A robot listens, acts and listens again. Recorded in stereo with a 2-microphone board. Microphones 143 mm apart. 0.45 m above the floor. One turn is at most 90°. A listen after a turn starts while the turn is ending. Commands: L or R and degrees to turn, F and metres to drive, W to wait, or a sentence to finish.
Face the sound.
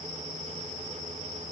W
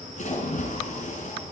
L60
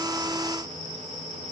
W
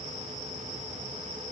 I heard a splash, but can't make it out now. It was about straight ahead or 60° left.